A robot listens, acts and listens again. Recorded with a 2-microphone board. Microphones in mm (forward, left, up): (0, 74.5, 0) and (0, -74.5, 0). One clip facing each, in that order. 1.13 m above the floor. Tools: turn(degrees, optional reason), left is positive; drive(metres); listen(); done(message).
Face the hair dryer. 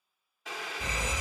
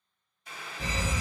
listen()
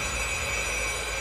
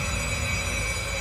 listen()
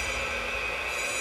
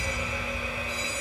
done("I can't make out a hair dryer to turn to.")